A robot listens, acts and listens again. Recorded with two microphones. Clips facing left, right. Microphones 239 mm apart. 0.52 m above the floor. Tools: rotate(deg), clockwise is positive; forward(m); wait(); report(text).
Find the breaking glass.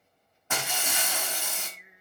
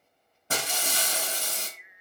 rotate(40)
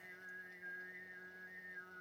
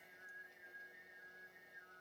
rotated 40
wait()
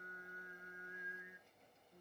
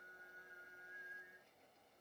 report("I heard breaking glass, but can't make it out now. It was about straight ahead or 100° right.")